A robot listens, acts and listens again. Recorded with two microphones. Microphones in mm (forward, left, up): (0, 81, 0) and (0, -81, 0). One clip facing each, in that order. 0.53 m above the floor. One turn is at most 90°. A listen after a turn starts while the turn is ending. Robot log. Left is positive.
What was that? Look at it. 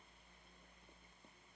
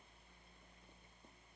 cmd idle
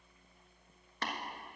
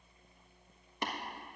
note: The tapping: about 15° right or 165° right.
cmd yaw -15
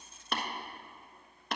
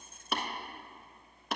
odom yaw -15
end: Found it: tapping, straight ahead, 1 to 2 m away.